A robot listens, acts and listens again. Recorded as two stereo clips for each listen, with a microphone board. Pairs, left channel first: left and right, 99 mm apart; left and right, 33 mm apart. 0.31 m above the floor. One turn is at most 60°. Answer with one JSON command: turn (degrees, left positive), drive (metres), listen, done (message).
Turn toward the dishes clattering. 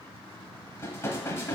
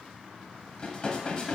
{"turn": 30}
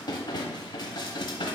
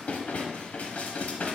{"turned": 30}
{"turn": 60}
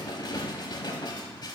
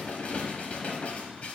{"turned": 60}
{"turn": 60}
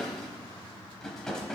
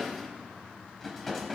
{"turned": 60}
{"done": "Found it: dishes clattering, straight ahead."}